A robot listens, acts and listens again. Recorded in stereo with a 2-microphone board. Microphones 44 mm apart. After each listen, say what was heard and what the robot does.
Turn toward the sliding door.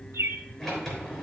Turn 30° left.
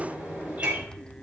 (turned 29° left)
So it is at 20° right. Turn 20° right.
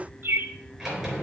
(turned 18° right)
Found it: a sliding door, straight ahead, 2 to 4 m away.